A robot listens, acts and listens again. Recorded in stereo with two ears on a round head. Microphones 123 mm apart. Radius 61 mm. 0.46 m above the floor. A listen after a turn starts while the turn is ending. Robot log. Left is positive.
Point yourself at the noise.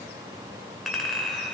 cmd yaw +30
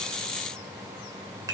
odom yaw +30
note: So it is at 30° right.
cmd yaw -30
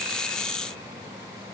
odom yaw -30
cmd idle
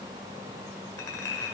note: The clink is now 25° left.
cmd yaw +25
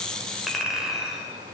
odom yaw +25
end: Found it: a clink, straight ahead, 1 to 2 m away.